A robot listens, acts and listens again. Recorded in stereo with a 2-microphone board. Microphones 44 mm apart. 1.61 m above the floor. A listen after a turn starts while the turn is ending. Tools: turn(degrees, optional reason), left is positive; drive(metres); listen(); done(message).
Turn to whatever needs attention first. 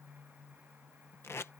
listen()
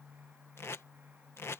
listen()
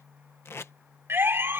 turn(degrees=-60, reason="The siren: about 60° right or 120° right.")
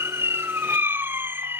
turn(degrees=-60, reason="So it is at 60° right.")
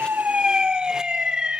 turn(degrees=-15, reason="The siren is now 15° right.")
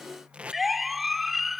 done("Found it: a siren, straight ahead.")